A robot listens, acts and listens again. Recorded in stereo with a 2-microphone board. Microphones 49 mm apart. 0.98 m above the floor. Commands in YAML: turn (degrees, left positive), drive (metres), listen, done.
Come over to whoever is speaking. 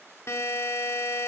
listen: true
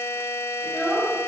turn: -30
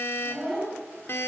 turn: 20
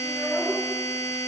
drive: 1.0
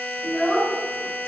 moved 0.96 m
drive: 1.0
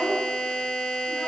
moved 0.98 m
drive: 1.0
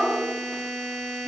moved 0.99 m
drive: 1.0
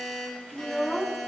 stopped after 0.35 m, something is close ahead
done: "I am next to the child speaking."